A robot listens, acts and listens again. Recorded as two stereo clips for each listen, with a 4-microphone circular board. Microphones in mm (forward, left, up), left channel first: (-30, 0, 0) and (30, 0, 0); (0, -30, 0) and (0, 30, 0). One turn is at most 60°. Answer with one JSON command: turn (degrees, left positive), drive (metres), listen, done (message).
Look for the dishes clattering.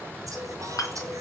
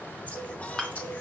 {"turn": -60}
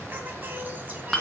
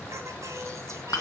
{"turn": -60}
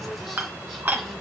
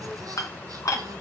{"turn": -60}
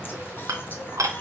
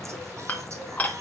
{"turn": -25}
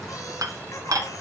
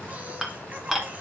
{"done": "Found it: dishes clattering, straight ahead."}